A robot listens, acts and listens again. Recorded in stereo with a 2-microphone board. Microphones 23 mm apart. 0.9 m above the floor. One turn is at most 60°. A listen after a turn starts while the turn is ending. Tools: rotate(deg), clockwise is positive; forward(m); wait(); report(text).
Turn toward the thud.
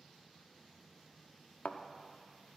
rotate(-60)
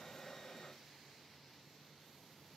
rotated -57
wait()
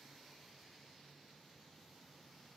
report("I heard a thud, but can't make it out now. It was about 15° left or 50° left.")